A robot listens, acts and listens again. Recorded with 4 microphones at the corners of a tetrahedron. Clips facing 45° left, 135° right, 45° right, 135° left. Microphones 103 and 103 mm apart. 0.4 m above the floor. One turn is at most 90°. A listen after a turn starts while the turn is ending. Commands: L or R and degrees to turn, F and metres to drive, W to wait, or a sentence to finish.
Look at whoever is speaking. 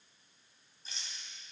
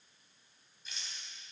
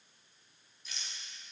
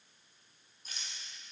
W
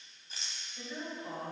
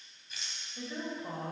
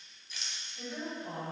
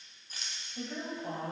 L90
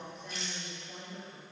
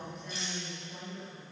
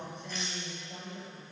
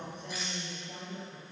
L90
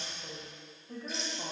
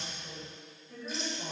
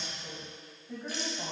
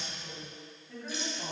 L15
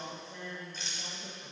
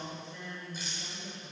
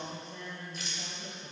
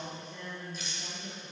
Found it: a woman speaking, straight ahead, 1 to 2 m away.